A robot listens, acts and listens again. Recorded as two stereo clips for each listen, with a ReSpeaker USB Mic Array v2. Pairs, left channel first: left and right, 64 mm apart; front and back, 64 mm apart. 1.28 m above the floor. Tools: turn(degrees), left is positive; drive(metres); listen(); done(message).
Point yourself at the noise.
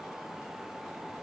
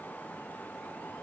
listen()
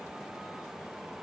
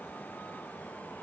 listen()
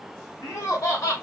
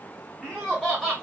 turn(degrees=100)
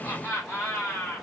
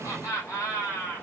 turn(degrees=30)
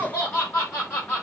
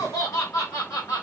turn(degrees=25)
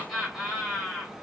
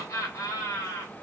done("Found it: laughter, straight ahead, 2 to 4 m away.")